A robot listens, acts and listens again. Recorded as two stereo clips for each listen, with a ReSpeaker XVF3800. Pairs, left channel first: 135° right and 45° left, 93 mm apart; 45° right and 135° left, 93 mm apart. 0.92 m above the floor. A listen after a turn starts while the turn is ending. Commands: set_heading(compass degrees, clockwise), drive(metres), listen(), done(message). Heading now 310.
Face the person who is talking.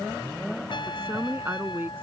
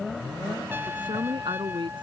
set_heading(200)
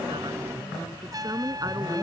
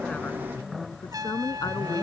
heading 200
done("Facing the woman speaking.")